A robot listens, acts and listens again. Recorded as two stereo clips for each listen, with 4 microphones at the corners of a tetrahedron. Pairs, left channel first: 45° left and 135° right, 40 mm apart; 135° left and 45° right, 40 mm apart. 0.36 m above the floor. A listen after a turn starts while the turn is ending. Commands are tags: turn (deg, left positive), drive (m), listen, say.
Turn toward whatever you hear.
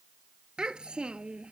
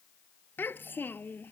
<turn deg="160"/>
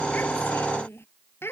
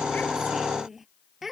<turn deg="40"/>
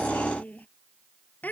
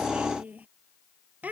<say>Found it: a child speaking, straight ahead.</say>